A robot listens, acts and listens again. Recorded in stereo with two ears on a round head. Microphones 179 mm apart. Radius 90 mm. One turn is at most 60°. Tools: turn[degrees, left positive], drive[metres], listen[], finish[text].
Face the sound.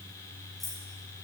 Action: turn[30]
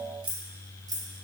Thought: So it is at 20° right.
Action: turn[-20]
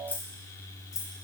Thought: The keys jangling is now 15° left.
Action: turn[15]
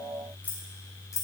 Thought: The keys jangling is now 15° left.
Action: turn[15]
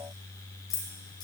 Thought: The keys jangling is now 25° left.
Action: turn[25]
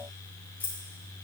Thought: The keys jangling is now 10° left.
Action: turn[10]
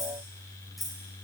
Action: finish[Found it: keys jangling, straight ahead.]